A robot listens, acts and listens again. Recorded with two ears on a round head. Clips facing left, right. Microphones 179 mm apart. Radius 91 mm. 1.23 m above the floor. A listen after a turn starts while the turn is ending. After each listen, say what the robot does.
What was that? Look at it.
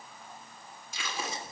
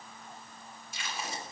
Turn 60° left.
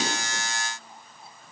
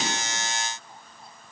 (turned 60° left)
Keep listening.
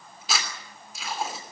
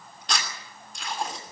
Found it: tape being pulled, straight ahead.